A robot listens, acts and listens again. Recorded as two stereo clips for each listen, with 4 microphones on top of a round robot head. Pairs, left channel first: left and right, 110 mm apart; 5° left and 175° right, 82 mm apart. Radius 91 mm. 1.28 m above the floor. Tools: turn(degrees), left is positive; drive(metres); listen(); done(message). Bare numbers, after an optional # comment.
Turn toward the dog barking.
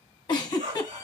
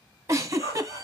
# The dog barking: 75° right.
turn(-75)
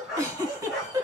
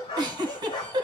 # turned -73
done("Facing the dog barking, 1 to 2 m away.")